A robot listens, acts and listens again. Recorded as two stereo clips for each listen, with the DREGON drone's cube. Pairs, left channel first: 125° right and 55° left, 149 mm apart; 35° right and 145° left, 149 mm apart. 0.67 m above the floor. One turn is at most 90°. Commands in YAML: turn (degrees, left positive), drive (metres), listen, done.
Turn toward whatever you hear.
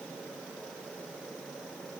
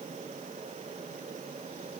listen: true
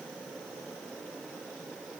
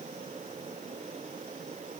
listen: true
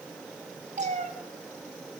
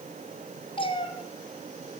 turn: 20
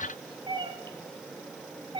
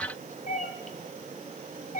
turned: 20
done: "Found it: a cat meowing, straight ahead, 1 to 2 m away."